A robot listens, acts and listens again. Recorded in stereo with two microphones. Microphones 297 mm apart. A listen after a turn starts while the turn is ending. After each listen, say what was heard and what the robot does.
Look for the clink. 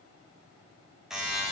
Keep listening.
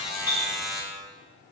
The clink: about 60° left or 120° left. Turn 60° left.
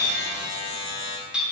Facing the clink.